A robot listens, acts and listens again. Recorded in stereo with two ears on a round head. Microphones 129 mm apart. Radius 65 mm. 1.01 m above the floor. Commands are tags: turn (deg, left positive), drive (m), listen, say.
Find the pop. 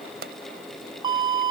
<turn deg="-90"/>
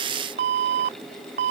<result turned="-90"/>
<say>I heard a pop from this way, but can't make it out now.</say>